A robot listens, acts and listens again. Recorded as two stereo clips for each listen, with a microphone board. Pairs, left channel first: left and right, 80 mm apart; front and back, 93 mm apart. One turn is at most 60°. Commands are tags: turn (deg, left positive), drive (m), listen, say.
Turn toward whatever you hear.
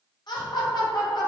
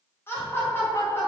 <turn deg="60"/>
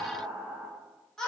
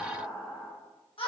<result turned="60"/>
<turn deg="10"/>
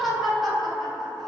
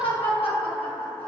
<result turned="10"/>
<say>Found it: laughter, straight ahead.</say>